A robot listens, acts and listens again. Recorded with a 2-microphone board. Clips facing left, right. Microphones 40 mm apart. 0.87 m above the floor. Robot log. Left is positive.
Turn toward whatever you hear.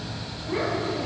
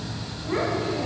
note: The child speaking: about 60° right or 120° right.
cmd yaw -60
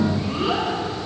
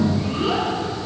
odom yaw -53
end: Found it: a child speaking, straight ahead, 2 to 4 m away.